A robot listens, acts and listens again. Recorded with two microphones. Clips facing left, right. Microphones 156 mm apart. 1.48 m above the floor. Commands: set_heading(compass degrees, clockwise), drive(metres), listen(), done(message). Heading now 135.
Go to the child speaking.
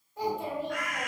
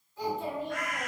set_heading(80)
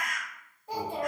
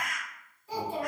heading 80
set_heading(15)
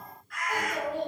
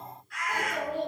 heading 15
set_heading(5)
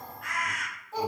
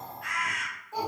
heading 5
drive(1.0)
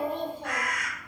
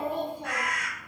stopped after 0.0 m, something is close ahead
done("Something is in my way. I am facing the child speaking but have not reached it.")